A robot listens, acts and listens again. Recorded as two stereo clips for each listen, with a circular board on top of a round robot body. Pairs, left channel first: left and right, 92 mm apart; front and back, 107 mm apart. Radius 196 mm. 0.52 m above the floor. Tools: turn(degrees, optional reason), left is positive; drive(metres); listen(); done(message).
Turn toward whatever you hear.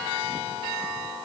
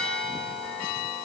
listen()
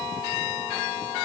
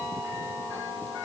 listen()
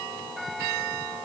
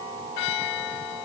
done("I can't make out anything to turn to.")